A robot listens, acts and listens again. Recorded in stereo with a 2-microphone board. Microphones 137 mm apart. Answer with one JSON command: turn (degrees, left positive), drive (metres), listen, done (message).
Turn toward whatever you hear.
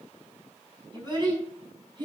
{"turn": -35}
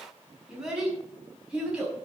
{"turn": -10}
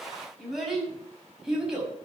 {"done": "Facing the child speaking, over 4 m away."}